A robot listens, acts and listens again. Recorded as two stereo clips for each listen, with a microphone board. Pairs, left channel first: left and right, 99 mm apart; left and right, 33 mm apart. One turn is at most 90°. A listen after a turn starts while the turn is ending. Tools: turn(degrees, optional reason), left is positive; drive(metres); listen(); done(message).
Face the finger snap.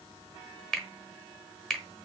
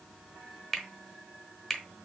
turn(degrees=30)
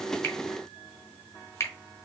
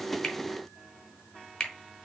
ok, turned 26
turn(degrees=90, reason="So it is at 145° left.")
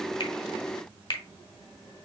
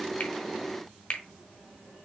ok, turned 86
turn(degrees=60, reason="The finger snap is now 60° left.")
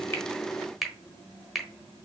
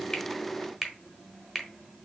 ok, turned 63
done("Facing the finger snap, 1 to 2 m away.")